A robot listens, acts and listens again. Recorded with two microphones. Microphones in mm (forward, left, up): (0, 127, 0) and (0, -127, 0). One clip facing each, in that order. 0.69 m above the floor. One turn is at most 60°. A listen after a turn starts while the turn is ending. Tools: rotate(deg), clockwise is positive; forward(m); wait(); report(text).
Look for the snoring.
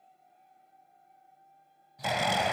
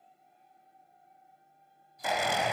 rotate(-60)
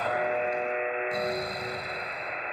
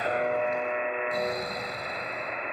rotate(-10)
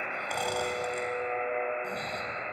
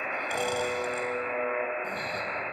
wait()
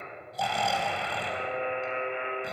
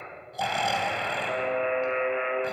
report("Facing the snoring, 2 to 4 m away.")